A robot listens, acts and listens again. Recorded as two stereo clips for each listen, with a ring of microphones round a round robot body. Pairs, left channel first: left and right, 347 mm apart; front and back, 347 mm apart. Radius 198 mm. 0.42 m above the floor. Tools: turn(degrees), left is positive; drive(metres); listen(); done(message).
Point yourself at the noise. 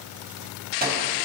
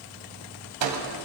turn(degrees=-155)
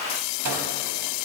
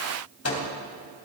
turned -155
turn(degrees=-45)
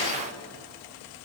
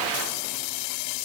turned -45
listen()
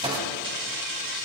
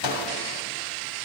turn(degrees=-15)
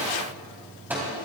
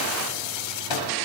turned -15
done("Found it: a microwave, straight ahead, 2 to 4 m away.")